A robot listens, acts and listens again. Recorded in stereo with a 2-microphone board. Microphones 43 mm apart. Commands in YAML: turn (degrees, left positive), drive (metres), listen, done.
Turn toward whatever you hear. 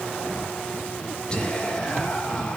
turn: 20
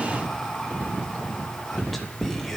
done: "Facing the whispering, 2 to 4 m away."